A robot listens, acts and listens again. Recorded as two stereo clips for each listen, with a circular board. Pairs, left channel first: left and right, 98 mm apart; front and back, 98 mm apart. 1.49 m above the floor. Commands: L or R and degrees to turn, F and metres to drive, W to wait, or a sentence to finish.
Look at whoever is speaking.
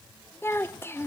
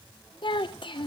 L25
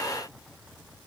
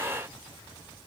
W
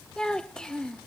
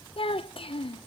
L10
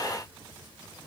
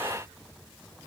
W
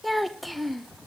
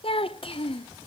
Facing the child speaking, under 1 m away.